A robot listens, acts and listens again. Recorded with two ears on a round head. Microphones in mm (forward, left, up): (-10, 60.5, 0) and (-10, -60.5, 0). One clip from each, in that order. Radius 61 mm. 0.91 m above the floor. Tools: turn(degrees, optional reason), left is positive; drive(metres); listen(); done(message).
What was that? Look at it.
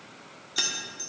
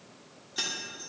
turn(degrees=35, reason="The keys jangling: about 35° left or 145° left.")
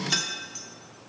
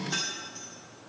turn(degrees=110, reason="So it is at 110° left.")
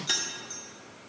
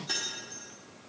turn(degrees=40, reason="The keys jangling is now 40° left.")
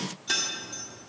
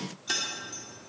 done("Found it: keys jangling, straight ahead.")